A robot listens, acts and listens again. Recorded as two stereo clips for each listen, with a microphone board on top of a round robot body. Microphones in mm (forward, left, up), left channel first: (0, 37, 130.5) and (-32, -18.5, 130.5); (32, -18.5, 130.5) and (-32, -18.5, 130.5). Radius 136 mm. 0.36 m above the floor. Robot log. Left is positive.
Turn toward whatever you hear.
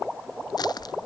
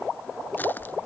note: The crushing: 60° left.
cmd yaw +60
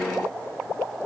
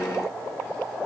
cmd idle
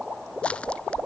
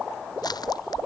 note: The crushing is now 15° right.
cmd yaw -15
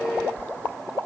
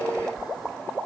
end: Facing the crushing.